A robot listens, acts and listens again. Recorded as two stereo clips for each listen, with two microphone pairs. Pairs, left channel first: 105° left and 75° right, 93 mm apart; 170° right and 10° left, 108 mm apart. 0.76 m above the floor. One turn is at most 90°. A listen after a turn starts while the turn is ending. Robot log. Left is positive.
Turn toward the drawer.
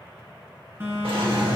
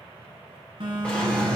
note: The drawer: 90° right.
cmd yaw -90
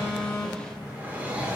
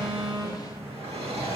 end: Found it: a drawer, straight ahead.